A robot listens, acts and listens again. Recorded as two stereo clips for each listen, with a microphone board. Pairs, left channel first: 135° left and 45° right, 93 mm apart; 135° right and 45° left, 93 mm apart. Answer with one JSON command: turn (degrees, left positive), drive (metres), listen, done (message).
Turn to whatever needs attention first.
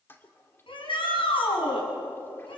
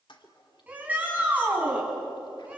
{"turn": 120}
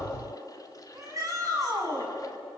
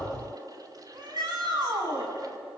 {"done": "Found it: a shout, straight ahead."}